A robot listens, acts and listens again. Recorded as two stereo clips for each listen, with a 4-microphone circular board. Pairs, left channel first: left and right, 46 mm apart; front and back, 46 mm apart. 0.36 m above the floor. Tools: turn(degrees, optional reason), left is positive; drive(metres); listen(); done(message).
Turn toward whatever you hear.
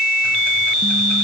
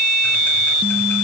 listen()
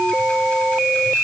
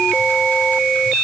listen()
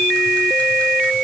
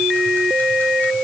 done("I can't make out anything.")